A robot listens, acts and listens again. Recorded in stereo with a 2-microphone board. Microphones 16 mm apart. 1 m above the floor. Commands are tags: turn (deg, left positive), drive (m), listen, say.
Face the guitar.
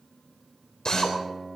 <turn deg="-30"/>
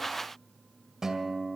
<turn deg="-145"/>
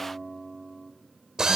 <say>Found it: a guitar, straight ahead.</say>